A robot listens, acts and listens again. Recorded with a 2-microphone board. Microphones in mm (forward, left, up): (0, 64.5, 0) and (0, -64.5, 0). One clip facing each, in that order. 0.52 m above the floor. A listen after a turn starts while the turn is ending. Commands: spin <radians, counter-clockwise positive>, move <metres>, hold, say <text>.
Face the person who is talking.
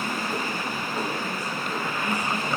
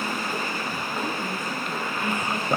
spin -0.96
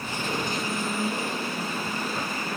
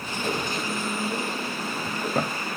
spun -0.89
say Facing the woman speaking.